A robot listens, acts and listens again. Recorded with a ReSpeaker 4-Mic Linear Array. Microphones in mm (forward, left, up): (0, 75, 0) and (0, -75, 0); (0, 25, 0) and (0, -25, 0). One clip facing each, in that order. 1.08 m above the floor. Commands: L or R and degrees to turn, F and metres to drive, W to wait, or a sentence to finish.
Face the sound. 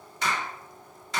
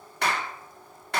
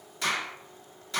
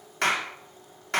R60
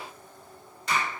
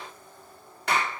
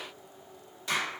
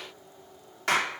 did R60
R60
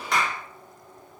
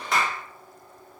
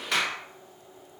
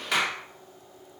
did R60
Found it: a clap, straight ahead.